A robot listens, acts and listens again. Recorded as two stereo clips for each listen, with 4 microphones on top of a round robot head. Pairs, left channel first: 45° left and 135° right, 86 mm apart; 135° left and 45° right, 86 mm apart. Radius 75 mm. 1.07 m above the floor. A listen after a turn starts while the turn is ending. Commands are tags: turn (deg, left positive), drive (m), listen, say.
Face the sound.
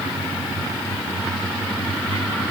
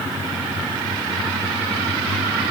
<listen/>
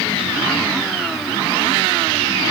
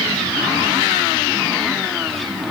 <listen/>
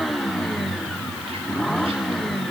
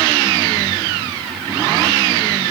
<say>I can't make out anything to turn to.</say>